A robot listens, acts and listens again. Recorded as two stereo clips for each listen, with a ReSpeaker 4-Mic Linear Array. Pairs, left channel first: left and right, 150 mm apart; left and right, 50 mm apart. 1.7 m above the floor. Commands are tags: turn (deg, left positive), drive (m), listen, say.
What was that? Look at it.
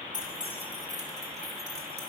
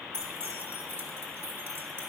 <turn deg="-45"/>
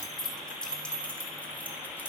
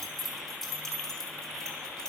<turn deg="15"/>
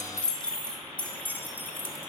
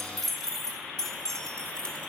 <turn deg="15"/>
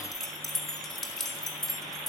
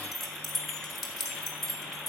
<say>Found it: keys jangling, straight ahead, 2 to 4 m away.</say>